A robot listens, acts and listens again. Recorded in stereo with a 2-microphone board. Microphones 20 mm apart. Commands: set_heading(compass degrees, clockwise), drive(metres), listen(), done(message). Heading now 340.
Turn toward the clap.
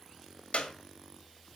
set_heading(270)
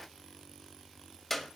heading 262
done("Found it: a clap, straight ahead, 1 to 2 m away.")